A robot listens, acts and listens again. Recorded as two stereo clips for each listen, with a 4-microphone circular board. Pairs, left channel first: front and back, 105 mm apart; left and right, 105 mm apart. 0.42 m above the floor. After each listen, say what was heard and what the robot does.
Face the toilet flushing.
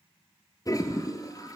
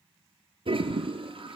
The toilet flushing: 55° right. Turn 55° right.
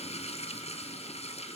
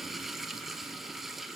Found it: a toilet flushing, straight ahead, 2 to 4 m away.